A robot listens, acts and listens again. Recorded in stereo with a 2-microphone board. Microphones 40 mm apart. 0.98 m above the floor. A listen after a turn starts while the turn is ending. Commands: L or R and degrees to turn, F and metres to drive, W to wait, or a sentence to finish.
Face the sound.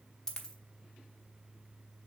L30
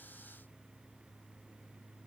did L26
W
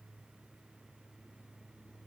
I heard a dropped coin, but can't make it out now. It was about 10° right or 140° left.